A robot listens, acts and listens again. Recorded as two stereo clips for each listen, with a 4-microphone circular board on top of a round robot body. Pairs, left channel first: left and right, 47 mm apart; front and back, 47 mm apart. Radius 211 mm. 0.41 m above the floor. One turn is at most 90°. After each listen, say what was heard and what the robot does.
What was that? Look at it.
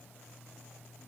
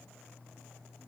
Keep listening.
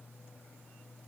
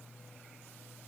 Keep listening.
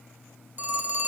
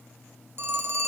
The phone ringing: 145° right. Turn 90° right.
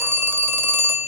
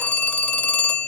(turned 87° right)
The phone ringing is now 55° right. Turn 55° right.
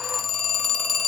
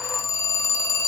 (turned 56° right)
Found it: a phone ringing, straight ahead, 1 to 2 m away.